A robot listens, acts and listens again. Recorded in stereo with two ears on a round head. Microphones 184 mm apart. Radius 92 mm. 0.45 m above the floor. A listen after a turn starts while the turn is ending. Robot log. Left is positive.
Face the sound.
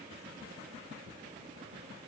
cmd idle
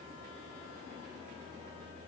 cmd idle
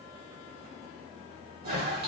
note: The toilet flushing: about 50° right or 130° right.
cmd yaw -50
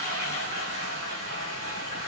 note: So it is at 75° right.
cmd yaw -75
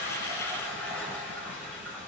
note: The toilet flushing is now 10° left.
cmd yaw +10
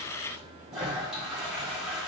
end: Facing the toilet flushing, 1 to 2 m away.